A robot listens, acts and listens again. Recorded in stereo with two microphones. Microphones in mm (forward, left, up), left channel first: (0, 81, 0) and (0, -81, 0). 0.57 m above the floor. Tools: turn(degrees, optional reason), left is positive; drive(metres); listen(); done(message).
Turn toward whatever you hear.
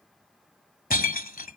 turn(degrees=60, reason="The breaking glass: about 60° left or 120° left.")
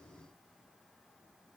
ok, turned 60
listen()
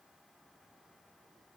done("I heard breaking glass, but can't make it out now. It was about straight ahead or 60° left.")